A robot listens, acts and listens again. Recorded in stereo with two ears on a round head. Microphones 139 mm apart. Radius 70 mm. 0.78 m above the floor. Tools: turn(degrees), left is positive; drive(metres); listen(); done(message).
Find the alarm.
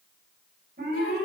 turn(degrees=-60)
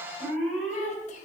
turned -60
done("Found it: an alarm, straight ahead.")